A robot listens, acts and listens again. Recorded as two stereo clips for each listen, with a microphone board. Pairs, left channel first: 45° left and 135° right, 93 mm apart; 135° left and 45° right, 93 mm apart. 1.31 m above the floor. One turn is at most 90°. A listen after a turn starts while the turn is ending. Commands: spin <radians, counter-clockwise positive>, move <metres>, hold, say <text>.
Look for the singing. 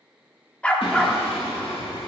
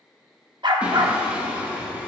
spin 0.52
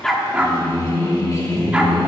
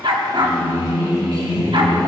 say Found it: singing, straight ahead.